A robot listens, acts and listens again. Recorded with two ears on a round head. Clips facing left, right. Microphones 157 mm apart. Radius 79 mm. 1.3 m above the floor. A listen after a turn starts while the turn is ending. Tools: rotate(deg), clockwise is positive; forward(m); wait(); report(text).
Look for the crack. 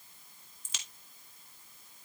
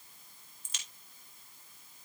rotate(-65)
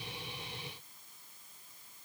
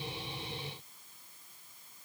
wait()
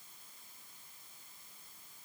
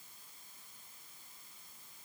report("I heard a crack, but can't make it out now. It was about straight ahead or 50° left.")